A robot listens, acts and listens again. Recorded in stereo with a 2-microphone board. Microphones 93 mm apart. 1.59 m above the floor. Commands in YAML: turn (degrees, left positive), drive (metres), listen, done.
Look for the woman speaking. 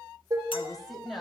turn: 30
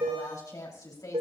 turn: 135
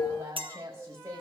turn: -35
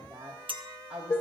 turn: -15
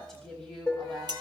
done: "Found it: a woman speaking, straight ahead."